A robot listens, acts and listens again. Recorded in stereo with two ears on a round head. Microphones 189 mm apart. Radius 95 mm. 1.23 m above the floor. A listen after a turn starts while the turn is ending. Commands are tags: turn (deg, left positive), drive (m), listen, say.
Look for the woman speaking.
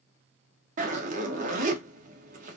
<listen/>
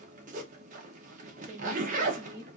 <turn deg="-30"/>
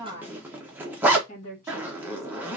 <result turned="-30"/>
<turn deg="35"/>
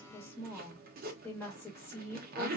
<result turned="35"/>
<turn deg="10"/>
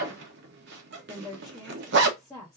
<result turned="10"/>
<say>Found it: a woman speaking, straight ahead, 1 to 2 m away.</say>